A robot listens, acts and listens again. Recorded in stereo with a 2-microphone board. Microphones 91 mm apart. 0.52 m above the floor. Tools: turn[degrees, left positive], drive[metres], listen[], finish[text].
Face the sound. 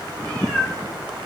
Thought: The cat meowing: about 15° left or 165° left.
Action: turn[15]
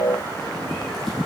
Action: listen[]
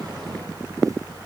Action: listen[]
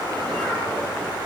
Action: finish[I heard a cat meowing, but can't make it out now. It was about straight ahead or 150° left.]